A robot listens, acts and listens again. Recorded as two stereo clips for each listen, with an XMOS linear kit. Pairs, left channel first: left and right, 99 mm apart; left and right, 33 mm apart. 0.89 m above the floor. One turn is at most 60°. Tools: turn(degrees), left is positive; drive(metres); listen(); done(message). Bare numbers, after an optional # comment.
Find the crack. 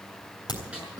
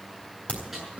# The crack: about 45° left or 135° left.
turn(45)
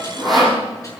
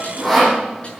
listen()
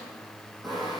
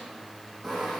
done("I heard a crack, but can't make it out now. It was about straight ahead or 90° left.")